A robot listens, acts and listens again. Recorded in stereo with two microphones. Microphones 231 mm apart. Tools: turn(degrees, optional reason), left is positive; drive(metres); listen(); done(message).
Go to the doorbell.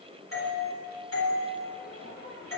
turn(degrees=70, reason="The doorbell: about 70° left or 110° left.")
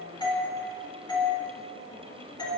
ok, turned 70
turn(degrees=20, reason="So it is at 20° left.")
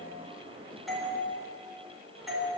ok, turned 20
drive(metres=1.0)
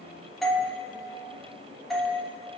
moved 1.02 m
drive(metres=1.0)
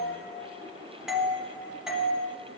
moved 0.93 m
drive(metres=1.0)
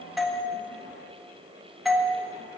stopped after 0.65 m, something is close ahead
done("I am next to the doorbell.")